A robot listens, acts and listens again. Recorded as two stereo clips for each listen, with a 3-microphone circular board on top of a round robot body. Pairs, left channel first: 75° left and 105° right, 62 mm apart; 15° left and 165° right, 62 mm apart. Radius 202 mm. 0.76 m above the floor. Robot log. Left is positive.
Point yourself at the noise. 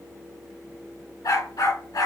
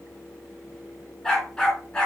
note: The dog barking: 90° left.
cmd yaw +90
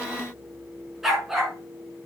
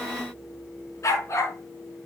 note: The dog barking is now 20° right.
cmd yaw -20
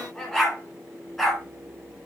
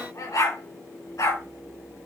note: The dog barking is now 15° right.
cmd yaw -15
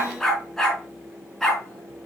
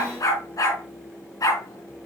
end: Facing the dog barking, over 4 m away.